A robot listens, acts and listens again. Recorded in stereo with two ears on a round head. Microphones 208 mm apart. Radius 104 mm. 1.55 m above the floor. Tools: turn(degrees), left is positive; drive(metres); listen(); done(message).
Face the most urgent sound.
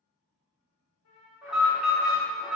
turn(degrees=-30)
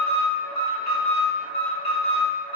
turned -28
turn(degrees=25)
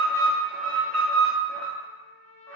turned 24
done("Found it: an alarm, straight ahead, under 1 m away.")